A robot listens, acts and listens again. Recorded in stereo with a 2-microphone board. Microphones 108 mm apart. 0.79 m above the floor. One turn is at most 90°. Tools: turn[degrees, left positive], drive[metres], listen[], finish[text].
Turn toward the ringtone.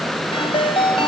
Thought: The ringtone: about 60° left or 120° left.
Action: turn[60]
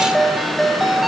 Action: finish[Facing the ringtone.]